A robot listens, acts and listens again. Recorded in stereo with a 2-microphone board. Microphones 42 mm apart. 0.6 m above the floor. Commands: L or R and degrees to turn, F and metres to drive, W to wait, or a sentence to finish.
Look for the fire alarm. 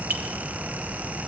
W
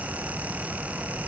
W
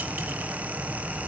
I can't make out a fire alarm.